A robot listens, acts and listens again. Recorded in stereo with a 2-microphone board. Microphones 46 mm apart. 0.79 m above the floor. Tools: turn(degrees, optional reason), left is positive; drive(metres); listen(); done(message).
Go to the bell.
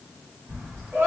turn(degrees=-70, reason="The bell: about 70° right or 110° right.")
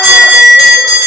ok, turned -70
drive(metres=1.0)
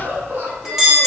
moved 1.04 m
drive(metres=1.0)
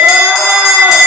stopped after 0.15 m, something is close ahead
done("I am next to the bell.")